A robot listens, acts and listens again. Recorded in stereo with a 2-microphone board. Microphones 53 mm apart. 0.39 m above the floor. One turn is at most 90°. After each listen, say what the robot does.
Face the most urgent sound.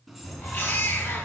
Turn 50° left.
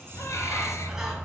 Keep listening.
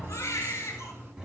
Turn 80° left.
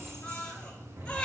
Turn 20° left.
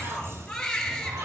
Turn 10° left.
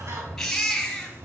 Facing the baby crying.